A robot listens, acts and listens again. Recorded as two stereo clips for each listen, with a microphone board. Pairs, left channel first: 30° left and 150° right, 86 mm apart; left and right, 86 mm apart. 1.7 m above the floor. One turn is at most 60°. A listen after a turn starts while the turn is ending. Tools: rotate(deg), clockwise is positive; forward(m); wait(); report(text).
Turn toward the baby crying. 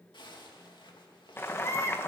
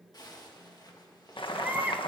rotate(25)
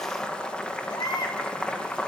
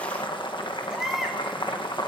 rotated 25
report("Facing the baby crying, 1 to 2 m away.")